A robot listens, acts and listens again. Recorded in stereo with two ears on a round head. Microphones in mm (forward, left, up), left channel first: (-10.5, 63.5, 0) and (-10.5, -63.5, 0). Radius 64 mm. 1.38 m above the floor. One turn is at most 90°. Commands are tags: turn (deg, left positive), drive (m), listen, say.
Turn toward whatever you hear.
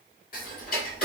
<turn deg="60"/>
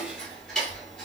<say>Facing the ticking, 2 to 4 m away.</say>